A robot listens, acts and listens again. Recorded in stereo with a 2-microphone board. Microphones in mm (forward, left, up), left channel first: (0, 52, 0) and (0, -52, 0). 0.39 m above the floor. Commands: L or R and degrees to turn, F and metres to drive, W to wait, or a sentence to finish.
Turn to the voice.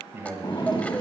R25
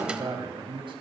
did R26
R125
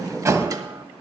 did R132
L10
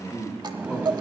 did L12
L20
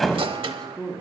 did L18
Found it: a man speaking, straight ahead.